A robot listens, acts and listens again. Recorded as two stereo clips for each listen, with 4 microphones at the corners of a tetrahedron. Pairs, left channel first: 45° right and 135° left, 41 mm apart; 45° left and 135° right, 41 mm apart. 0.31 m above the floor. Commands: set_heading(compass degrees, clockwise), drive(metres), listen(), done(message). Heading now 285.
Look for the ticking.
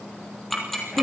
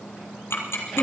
set_heading(245)
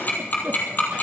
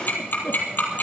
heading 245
done("Found it: ticking, straight ahead, 2 to 4 m away.")